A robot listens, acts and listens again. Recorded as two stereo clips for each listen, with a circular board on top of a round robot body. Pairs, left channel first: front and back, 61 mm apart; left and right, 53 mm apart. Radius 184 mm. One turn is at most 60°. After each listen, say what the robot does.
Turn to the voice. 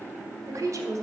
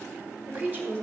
Turn 60° right.
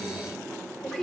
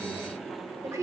Turn 60° right.
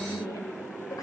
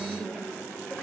Turn 10° left.
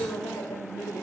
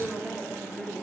Turn 20° left.
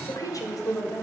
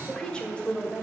Turn 25° left.
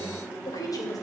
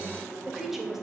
Facing the woman speaking.